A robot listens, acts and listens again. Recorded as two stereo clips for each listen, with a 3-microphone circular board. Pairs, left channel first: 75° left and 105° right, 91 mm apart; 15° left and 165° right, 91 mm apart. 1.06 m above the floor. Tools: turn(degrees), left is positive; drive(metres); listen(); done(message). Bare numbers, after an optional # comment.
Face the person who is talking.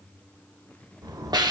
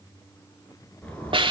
listen()
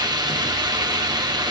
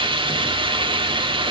listen()
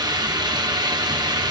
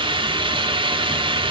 done("I can't make out anyone speaking to turn to.")